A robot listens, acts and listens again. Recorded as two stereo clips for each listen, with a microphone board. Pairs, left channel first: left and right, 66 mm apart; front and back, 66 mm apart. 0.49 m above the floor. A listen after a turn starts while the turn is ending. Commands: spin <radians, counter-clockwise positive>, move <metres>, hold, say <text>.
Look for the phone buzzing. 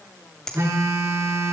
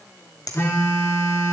spin -0.96
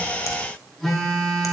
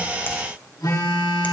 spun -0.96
say Found it: a phone buzzing, straight ahead, over 4 m away.